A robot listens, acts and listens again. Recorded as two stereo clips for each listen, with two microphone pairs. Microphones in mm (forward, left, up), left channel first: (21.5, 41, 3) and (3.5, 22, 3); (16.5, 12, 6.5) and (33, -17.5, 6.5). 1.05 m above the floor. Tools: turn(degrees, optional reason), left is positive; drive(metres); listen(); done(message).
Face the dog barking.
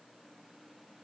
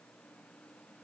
listen()
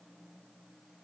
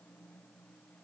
listen()
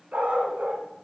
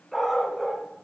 turn(degrees=-155, reason="The dog barking: 155° right.")
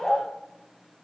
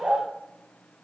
turn(degrees=-35, reason="The dog barking is now 35° right.")
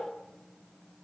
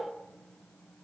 listen()
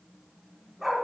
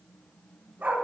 turn(degrees=-45, reason="The dog barking is now 45° right.")
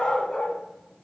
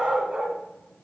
done("Found it: a dog barking, straight ahead, 2 to 4 m away.")